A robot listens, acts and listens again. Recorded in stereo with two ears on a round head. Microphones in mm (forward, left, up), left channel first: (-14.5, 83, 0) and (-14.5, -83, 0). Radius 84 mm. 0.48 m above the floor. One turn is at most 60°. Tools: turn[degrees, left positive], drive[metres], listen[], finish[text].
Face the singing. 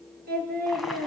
Thought: The singing: about 60° right or 120° right.
Action: turn[-60]
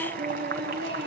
Thought: So it is at 60° right.
Action: turn[-60]
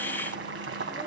Action: listen[]
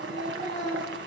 Action: finish[Facing the singing.]